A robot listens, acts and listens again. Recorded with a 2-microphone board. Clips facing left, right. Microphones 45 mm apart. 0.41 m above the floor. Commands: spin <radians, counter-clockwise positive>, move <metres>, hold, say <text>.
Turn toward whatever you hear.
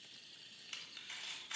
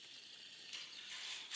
spin 1.05
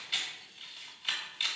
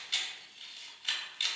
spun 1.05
spin 0.17
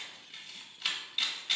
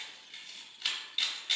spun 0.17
say Found it: a camera shutter, straight ahead.